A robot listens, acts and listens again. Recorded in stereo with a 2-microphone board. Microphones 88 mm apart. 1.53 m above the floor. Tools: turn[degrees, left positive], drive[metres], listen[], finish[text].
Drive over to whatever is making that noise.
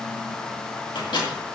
Thought: The microwave: about 65° left or 115° left.
Action: turn[65]
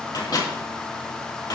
Thought: So it is at 50° left.
Action: turn[50]
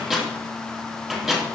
Action: drive[1.0]
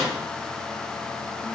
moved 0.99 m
Action: listen[]
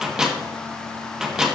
Action: drive[1.0]
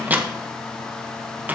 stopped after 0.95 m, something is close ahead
Thought: The microwave is now 20° right.
Action: turn[-20]
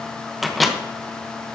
Action: finish[Arrived at the microwave, straight ahead.]